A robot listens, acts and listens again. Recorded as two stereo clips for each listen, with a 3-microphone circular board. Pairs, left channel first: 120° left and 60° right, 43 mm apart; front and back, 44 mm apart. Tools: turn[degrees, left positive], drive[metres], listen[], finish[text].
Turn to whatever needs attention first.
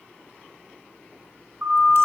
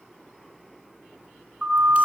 Thought: The siren: 105° right.
Action: turn[-105]
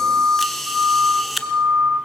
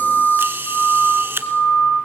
Thought: The siren is now 10° right.
Action: turn[-10]
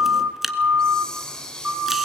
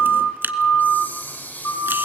Action: finish[Facing the siren, over 4 m away.]